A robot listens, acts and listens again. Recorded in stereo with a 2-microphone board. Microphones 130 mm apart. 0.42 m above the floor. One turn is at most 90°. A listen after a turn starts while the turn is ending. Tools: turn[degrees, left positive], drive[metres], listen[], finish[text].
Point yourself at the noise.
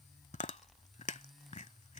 Thought: The chewing: about 75° left or 105° left.
Action: turn[75]
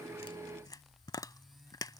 Thought: So it is at 30° left.
Action: turn[30]
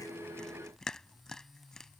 Action: finish[Facing the chewing.]